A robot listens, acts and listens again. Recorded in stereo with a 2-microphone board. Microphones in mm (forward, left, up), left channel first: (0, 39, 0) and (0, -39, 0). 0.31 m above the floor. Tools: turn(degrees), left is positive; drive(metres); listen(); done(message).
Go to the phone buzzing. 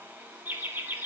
listen()
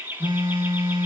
turn(degrees=-90)
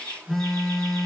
drive(metres=1.0)
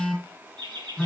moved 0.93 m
drive(metres=1.0)
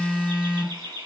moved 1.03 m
turn(degrees=-15)
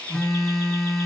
drive(metres=1.0)
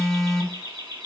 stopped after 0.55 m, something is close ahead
done("Arrived at the phone buzzing, straight ahead.")